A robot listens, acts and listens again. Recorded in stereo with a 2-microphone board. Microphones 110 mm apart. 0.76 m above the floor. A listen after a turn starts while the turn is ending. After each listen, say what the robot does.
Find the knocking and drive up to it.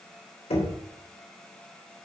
Turn 70° left.
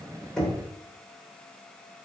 Drive 1.0 m forward.
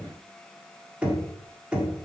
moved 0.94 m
Turn 10° right.
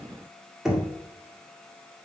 Drive 1.0 m forward.
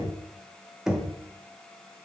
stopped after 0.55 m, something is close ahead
I am next to the knocking.